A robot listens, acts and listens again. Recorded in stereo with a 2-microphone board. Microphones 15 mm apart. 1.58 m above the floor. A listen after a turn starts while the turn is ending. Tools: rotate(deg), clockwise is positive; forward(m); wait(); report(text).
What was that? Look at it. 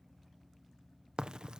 rotate(90)
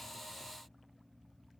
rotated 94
report("I heard a crack from this way, but can't make it out now.")